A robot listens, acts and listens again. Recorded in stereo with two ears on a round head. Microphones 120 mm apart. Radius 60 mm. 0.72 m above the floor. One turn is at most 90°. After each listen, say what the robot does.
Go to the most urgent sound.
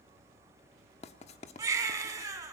Turn 20° right.
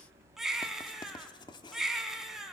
Drive 1.0 m forward.
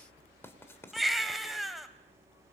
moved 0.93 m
Drive 1.0 m forward.
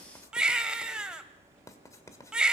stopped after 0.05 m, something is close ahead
Arrived at the baby crying, straight ahead.